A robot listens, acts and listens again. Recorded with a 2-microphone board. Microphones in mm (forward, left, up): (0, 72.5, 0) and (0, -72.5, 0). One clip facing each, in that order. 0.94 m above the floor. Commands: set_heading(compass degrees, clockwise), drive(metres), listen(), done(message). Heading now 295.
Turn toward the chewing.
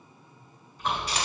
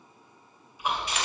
set_heading(325)
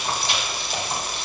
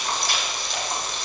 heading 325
set_heading(305)
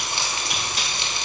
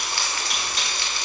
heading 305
done("Found it: chewing, straight ahead.")